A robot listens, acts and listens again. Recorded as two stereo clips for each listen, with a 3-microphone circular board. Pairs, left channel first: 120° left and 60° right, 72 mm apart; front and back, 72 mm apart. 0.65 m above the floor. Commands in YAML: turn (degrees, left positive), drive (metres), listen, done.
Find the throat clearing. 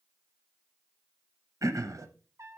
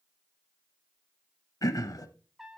turn: -25
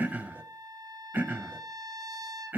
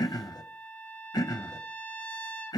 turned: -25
done: "Found it: throat clearing, straight ahead, under 1 m away."